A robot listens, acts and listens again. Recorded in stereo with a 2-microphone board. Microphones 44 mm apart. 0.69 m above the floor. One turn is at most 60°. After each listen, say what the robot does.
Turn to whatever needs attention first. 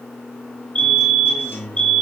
Turn 25° left.
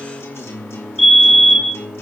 Facing the fire alarm, 2 to 4 m away.